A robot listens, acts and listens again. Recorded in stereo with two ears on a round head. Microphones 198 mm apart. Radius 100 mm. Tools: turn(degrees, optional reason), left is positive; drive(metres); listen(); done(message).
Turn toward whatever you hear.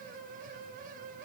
listen()
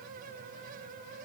listen()
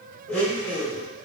turn(degrees=30)
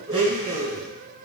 turn(degrees=-25, reason="So it is at 25° right.")
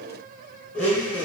done("Facing the blender.")